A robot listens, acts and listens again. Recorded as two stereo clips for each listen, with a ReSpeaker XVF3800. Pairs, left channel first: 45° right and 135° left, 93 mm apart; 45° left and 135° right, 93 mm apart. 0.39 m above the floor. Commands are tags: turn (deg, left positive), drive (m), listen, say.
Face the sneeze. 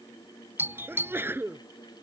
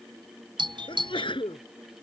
<turn deg="70"/>
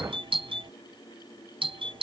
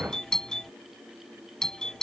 <say>I heard a sneeze from this way, but can't make it out now.</say>